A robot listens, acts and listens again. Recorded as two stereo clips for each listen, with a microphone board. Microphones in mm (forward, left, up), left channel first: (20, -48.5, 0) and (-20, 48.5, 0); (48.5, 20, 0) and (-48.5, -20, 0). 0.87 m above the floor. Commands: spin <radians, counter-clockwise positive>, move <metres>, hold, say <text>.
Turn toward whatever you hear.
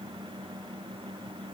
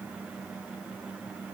hold
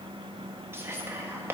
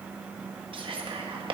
spin 3.05
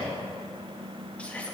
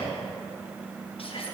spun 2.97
spin 0.17
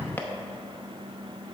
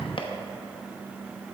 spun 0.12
say Found it: whispering, straight ahead.